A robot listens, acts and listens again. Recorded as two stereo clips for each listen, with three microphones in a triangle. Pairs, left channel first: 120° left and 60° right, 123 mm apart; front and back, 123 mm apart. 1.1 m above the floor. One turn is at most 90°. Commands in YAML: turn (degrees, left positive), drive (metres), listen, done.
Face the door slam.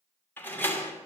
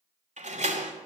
turn: -90
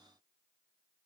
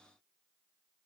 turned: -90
turn: -75
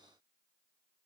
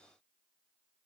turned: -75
done: "I heard a door slam from this way, but can't make it out now."